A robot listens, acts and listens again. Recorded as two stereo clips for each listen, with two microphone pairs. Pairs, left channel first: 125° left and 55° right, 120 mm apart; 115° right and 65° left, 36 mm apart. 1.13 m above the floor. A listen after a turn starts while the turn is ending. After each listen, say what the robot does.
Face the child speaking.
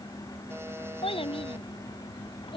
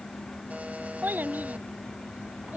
Turn 90° left.
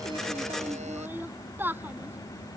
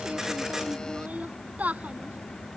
Turn 20° left.
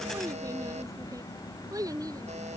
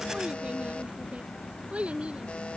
Found it: a child speaking, straight ahead.